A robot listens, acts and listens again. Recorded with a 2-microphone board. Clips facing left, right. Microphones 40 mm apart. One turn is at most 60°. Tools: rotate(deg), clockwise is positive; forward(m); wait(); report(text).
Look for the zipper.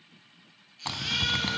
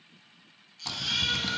rotate(-40)
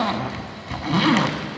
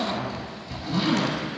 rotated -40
rotate(-60)
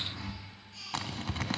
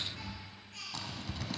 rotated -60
rotate(-60)
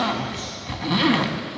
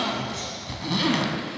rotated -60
rotate(-25)
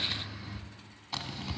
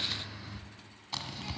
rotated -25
report("Facing the zipper.")